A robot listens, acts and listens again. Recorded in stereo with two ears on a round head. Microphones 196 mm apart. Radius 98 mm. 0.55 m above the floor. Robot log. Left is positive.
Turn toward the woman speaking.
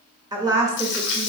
cmd yaw -30
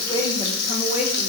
note: So it is at 30° left.
cmd yaw +30
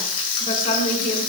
note: The woman speaking is now 40° left.
cmd yaw +40
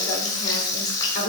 note: The woman speaking is now 35° left.
cmd yaw +35
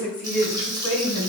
note: The woman speaking is now 10° left.
cmd yaw +10
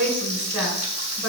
end: Found it: a woman speaking, straight ahead.